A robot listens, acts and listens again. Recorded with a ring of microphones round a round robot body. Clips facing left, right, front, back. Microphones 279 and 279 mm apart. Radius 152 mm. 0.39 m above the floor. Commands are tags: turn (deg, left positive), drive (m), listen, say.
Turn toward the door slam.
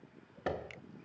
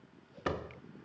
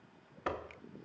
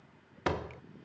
<turn deg="-165"/>
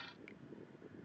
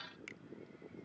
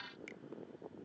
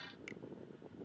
<say>I heard a door slam from this way, but can't make it out now.</say>